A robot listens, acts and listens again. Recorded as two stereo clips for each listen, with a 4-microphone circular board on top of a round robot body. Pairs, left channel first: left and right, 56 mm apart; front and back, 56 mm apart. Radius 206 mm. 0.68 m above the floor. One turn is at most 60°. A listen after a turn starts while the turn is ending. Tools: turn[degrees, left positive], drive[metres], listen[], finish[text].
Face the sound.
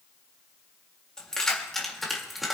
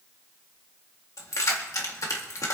Action: finish[Facing the keys jangling.]